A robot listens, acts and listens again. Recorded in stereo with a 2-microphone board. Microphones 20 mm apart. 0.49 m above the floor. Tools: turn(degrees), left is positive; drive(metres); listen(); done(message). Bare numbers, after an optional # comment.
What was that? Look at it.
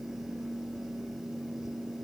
listen()
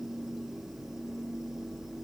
listen()
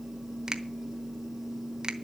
# The finger snap: about 40° right or 140° right.
turn(-40)
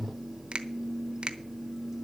# So it is at 90° right.
turn(-90)
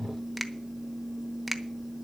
done("Facing the finger snap.")